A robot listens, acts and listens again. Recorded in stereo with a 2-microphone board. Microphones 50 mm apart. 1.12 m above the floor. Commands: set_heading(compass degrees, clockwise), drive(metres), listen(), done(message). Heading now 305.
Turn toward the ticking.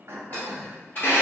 set_heading(265)
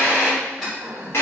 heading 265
done("Found it: ticking, straight ahead, 1 to 2 m away.")